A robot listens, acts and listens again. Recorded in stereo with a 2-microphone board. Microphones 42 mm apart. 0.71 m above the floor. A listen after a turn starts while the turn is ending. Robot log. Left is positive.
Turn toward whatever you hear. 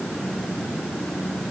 cmd idle
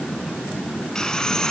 note: The sawing: about 20° left or 160° left.
cmd yaw +20
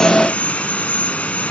note: So it is at 140° left.
cmd yaw +140
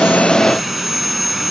end: Found it: sawing, straight ahead.